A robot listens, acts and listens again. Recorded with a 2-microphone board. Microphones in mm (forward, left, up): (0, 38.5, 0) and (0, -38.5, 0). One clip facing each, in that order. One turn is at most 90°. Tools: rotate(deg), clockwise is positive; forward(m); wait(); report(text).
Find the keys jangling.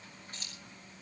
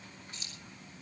rotate(-40)
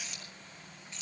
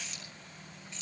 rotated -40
report("Facing the keys jangling, over 4 m away.")